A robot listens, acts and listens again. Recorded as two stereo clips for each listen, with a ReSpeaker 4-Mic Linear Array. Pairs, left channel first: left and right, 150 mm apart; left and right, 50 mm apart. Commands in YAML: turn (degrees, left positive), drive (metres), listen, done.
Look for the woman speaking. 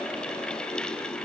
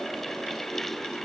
listen: true
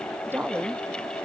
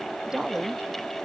turn: -30
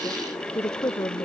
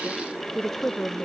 turn: 20
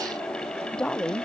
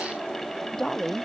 done: "Found it: a woman speaking, straight ahead."